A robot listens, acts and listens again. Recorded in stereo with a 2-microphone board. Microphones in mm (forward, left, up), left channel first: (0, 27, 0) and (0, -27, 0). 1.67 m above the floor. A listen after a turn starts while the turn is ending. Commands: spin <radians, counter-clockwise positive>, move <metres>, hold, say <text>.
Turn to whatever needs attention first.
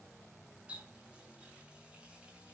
hold
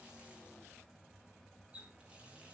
hold
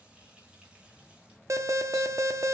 spin -1.13
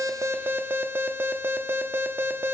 spin -0.70
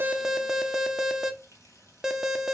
spin -0.17
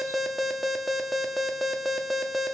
say Found it: an alarm, straight ahead.